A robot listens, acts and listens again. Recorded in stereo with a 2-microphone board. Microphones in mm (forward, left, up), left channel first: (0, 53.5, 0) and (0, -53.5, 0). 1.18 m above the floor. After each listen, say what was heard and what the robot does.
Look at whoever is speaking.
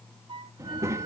The child speaking: about 25° right or 155° right. Turn 25° right.
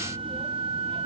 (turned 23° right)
Keep listening.
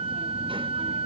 Keep listening.
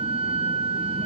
I heard a child speaking, but can't make it out now. It was about straight ahead or 130° right.